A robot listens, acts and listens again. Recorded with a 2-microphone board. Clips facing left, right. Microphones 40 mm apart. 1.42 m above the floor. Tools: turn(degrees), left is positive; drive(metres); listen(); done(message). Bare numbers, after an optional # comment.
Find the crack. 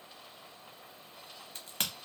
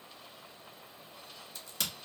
# The crack: about 50° left or 130° left.
turn(50)
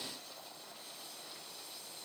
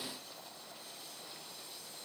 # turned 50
listen()
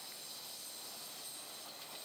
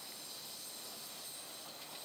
done("I heard a crack, but can't make it out now. It was about straight ahead or 80° left.")